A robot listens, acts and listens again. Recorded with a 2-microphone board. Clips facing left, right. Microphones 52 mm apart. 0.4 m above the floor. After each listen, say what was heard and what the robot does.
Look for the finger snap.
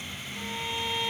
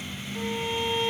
Keep listening.
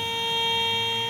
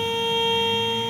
Keep listening.
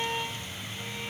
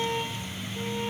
I can't make out a finger snap to turn to.